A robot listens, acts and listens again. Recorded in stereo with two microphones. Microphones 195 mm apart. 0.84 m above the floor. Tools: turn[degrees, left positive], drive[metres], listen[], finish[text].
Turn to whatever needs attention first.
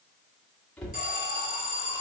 Thought: The alarm: about 45° left or 135° left.
Action: turn[45]
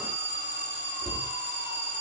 Thought: So it is at 80° left.
Action: turn[80]
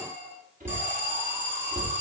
Thought: The alarm is now 15° right.
Action: turn[-15]
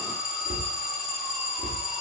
Action: finish[Found it: an alarm, straight ahead, 2 to 4 m away.]